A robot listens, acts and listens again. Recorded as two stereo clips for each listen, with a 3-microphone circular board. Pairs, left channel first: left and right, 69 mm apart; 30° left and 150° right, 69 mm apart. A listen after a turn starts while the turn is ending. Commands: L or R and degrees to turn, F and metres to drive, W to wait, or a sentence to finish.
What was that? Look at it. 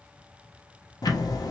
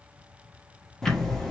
L110
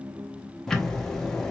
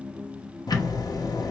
L10
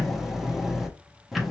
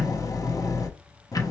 Found it: ticking, straight ahead, under 1 m away.